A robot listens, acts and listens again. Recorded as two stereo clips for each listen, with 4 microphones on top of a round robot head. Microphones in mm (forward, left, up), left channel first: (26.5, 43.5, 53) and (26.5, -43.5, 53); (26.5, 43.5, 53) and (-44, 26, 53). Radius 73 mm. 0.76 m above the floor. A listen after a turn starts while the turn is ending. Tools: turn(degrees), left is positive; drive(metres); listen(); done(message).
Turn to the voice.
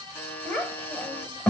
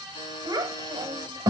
turn(degrees=165)
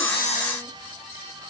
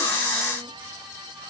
listen()
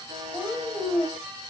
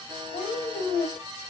turn(degrees=10)
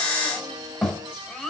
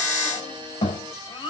done("Found it: a child speaking, straight ahead.")